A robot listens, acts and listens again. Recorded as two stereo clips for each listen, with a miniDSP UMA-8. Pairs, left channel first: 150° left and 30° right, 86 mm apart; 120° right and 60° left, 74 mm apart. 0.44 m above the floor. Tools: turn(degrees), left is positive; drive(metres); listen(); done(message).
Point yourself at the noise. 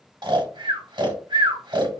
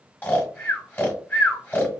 turn(degrees=-55)
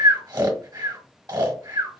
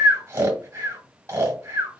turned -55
turn(degrees=10)
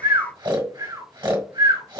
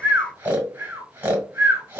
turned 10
done("Found it: snoring, straight ahead, 1 to 2 m away.")